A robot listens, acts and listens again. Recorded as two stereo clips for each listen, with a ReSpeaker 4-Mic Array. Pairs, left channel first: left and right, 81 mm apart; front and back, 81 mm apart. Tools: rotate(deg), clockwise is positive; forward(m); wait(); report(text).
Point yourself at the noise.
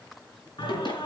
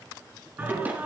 rotate(-110)
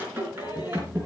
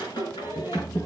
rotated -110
rotate(25)
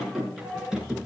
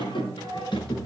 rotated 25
rotate(10)
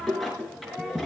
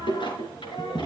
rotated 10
report("Facing the singing.")